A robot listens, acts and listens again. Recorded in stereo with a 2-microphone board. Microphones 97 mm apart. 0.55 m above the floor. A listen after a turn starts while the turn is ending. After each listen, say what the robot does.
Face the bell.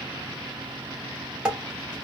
Keep listening.
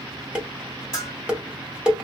Turn 35° left.
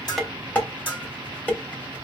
Turn 105° left.
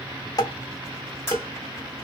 Turn 10° right.
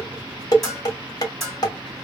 Found it: a bell, straight ahead.